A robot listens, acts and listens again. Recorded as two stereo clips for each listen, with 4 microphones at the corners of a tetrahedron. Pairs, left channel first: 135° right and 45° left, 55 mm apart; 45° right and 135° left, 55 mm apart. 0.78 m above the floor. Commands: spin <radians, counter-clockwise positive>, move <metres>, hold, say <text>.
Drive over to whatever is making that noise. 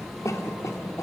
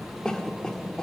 spin -2.09
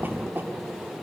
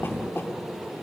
move 1.0
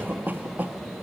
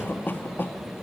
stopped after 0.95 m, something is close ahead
say Arrived at the cough, straight ahead.